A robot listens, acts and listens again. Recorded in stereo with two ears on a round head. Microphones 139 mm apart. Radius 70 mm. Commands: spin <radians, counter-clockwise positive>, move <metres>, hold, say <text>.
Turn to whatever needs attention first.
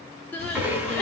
spin 0.52
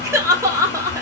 spin -0.35
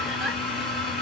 hold
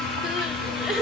say Found it: crying, straight ahead.